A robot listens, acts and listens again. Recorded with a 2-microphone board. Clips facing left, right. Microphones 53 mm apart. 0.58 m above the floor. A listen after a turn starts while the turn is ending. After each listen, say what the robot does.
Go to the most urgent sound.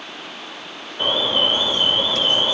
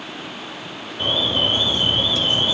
Turn 35° left.
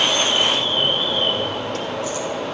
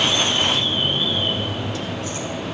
Turn 100° left.
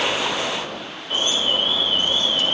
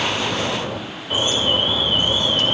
Turn 25° right.
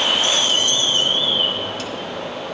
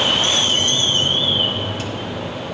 Drive 1.0 m forward.
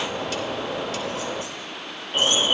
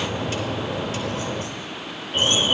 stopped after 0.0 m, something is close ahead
Blocked. The alarm is further on, straight ahead.